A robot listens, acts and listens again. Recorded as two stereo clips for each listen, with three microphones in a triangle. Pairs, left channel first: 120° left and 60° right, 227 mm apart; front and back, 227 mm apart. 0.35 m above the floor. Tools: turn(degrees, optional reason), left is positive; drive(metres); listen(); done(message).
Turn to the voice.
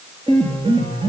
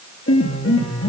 listen()
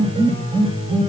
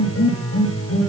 listen()
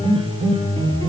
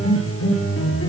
done("I can't make out anyone speaking to turn to.")